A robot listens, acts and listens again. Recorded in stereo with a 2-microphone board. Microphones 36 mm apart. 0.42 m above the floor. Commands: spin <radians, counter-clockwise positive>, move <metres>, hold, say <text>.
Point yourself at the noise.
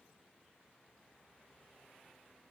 hold
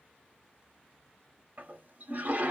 spin -0.87
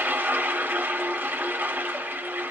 spin -1.40
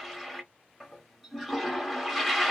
say Facing the toilet flushing, under 1 m away.